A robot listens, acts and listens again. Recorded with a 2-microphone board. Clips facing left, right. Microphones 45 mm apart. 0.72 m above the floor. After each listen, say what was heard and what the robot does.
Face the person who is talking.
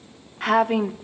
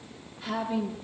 The woman speaking: about 65° left or 115° left. Turn 65° left.
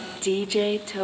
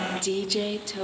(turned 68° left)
So it is at 30° left. Turn 30° left.
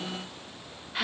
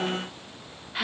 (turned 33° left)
Found it: a woman speaking, straight ahead, 1 to 2 m away.